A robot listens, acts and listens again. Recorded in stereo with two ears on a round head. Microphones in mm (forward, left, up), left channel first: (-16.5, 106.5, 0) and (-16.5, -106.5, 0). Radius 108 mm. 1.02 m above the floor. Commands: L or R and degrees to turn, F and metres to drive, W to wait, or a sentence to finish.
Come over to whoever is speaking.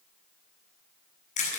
W
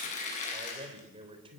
R25
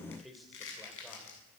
F1.0
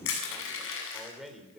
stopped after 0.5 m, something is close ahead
Something is in my way. I am facing the man speaking but have not reached it.